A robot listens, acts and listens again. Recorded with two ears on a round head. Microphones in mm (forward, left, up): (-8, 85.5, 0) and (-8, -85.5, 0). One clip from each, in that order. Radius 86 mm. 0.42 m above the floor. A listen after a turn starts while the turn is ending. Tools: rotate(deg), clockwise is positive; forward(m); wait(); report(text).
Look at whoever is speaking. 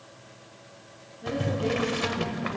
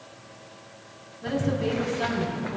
rotate(25)
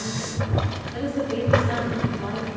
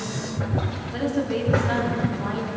report("Facing the woman speaking.")